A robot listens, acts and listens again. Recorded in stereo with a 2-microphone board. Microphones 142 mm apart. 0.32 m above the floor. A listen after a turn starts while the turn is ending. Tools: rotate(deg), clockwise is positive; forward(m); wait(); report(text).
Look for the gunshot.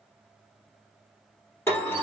wait()
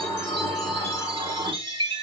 wait()
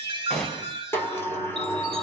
rotate(-30)
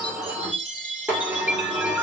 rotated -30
wait()
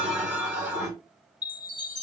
report("I heard a gunshot, but can't make it out now. It was about 25° right or 145° left.")